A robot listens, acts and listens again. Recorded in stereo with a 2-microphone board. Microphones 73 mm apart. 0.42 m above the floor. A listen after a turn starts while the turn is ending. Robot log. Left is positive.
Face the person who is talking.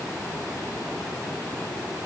cmd idle
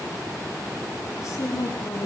note: The woman speaking: about 45° left or 135° left.
cmd yaw +45
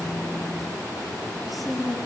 end: Found it: a woman speaking, straight ahead, over 4 m away.